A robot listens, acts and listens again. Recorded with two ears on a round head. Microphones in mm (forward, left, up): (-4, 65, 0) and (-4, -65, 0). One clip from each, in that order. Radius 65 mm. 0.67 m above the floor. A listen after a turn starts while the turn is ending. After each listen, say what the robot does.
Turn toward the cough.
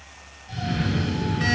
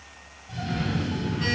Turn 35° left.
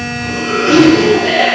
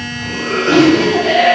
Found it: a cough, straight ahead, 1 to 2 m away.